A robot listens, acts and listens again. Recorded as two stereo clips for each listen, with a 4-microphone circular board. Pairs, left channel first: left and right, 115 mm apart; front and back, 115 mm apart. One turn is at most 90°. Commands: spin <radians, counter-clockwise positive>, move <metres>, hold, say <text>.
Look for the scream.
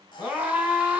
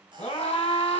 spin -0.26
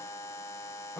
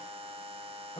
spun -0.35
say Found it: a scream, straight ahead, 1 to 2 m away.